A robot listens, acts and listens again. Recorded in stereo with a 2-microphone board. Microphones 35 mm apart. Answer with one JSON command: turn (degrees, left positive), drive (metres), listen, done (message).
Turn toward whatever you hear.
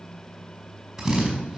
{"turn": -30}
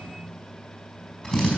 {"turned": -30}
{"turn": 20}
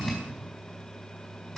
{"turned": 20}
{"turn": 10}
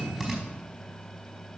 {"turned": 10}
{"done": "Facing the drill, over 4 m away."}